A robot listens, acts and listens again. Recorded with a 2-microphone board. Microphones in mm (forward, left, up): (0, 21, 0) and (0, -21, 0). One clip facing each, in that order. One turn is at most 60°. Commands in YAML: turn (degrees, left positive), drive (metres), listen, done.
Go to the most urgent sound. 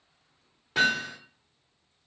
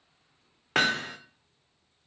listen: true
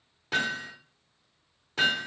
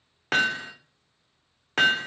listen: true
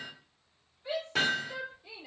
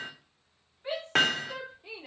turn: -45
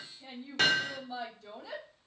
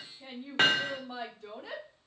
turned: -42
turn: -60
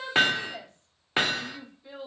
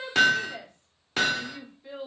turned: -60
turn: -30
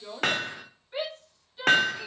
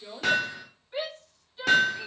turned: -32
drive: 1.0
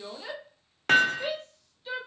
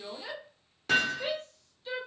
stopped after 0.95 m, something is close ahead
turn: 10
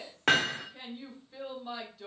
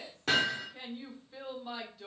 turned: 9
done: "Arrived at the shout, straight ahead."